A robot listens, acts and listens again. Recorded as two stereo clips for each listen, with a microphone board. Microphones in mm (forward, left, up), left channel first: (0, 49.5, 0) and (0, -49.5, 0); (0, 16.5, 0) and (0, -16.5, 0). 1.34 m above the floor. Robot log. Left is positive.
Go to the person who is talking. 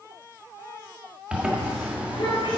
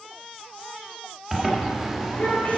note: The child speaking: about 60° left or 120° left.
cmd yaw +60
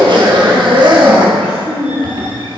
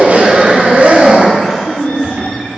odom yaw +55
note: So it is at 10° left.
cmd yaw +10
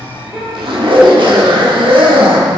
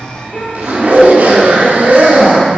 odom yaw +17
cmd fwd 1.0
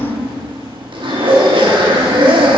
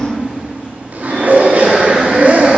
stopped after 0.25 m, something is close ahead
end: Something is in my way. I am facing the child speaking but have not reached it.